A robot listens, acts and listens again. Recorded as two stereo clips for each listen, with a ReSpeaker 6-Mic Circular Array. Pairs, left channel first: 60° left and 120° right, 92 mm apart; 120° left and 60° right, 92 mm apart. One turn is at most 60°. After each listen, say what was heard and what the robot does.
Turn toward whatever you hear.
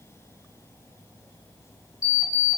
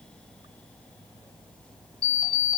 The alarm clock: 110° left. Turn 60° left.
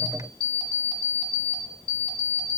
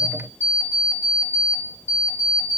The alarm clock is now 55° left. Turn 55° left.
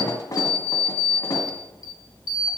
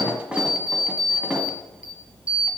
The alarm clock is now 15° left. Turn 15° left.
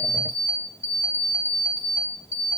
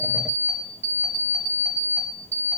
Facing the alarm clock.